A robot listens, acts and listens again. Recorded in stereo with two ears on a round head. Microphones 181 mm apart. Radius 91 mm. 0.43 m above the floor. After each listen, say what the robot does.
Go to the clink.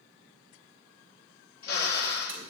Keep listening.
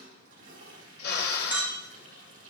Turn 30° right.
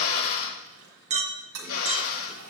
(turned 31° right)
Turn 145° right.
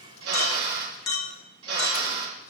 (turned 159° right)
Turn 15° left.
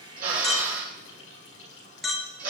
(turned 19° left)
Drive 1.0 m forward.
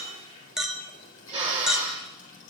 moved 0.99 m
Drive 1.0 m forward.
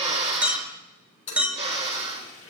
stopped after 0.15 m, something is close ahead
Turn 10° right.
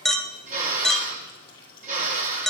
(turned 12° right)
Arrived at the clink, straight ahead.